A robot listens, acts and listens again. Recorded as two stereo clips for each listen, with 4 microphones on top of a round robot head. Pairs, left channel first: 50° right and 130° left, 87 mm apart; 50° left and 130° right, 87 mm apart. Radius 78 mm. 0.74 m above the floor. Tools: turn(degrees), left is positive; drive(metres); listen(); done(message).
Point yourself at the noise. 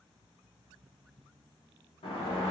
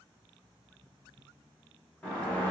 turn(degrees=-30)
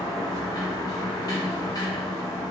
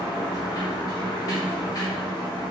done("Facing the sliding door, under 1 m away.")